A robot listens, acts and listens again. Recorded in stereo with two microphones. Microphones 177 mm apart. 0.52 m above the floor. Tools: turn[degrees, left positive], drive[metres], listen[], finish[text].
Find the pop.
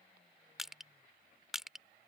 Action: listen[]
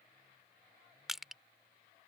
Action: listen[]
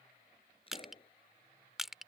Thought: The pop: about 35° left or 145° left.
Action: turn[35]
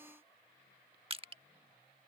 Action: listen[]
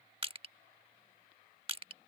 Action: finish[I heard a pop, but can't make it out now. It was about straight ahead or 110° left.]